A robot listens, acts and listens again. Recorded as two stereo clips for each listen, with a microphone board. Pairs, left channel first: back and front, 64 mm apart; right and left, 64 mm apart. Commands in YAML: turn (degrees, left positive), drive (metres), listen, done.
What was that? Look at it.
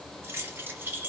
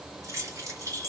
turn: 60
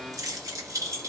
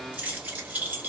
turn: 30
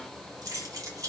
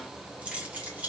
turn: 25
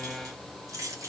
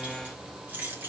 turn: 30
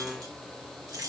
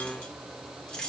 turn: -10
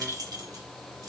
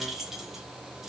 done: "Facing the keys jangling."